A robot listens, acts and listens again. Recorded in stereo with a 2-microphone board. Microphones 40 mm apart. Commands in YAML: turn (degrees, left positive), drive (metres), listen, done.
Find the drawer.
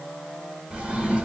turn: -30
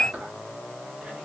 listen: true
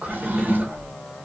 turn: -115
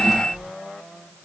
turn: -15
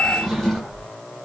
done: "Found it: a drawer, straight ahead."